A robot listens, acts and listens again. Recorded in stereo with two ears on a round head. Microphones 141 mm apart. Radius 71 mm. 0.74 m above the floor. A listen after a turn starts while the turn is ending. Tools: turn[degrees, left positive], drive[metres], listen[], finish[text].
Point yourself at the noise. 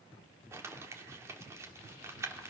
Thought: The crumpling: about 20° right or 160° right.
Action: turn[-20]
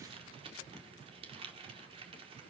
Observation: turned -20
Thought: So it is at 140° right.
Action: turn[-140]
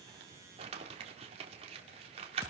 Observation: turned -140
Thought: The crumpling is now 45° right.
Action: turn[-45]
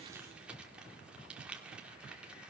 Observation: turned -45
Action: finish[Facing the crumpling.]